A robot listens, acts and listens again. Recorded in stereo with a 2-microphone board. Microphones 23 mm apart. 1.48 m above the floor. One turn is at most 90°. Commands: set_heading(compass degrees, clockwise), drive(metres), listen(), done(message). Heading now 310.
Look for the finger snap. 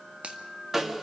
set_heading(10)
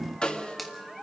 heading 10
listen()
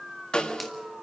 listen()
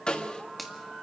done("Facing the finger snap.")